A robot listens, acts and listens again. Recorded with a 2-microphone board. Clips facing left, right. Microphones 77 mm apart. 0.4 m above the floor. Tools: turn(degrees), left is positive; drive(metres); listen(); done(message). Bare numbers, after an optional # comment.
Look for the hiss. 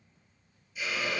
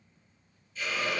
turn(30)
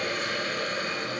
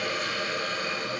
# So it is at 140° left.
turn(140)
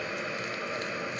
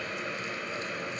done("Facing the hiss.")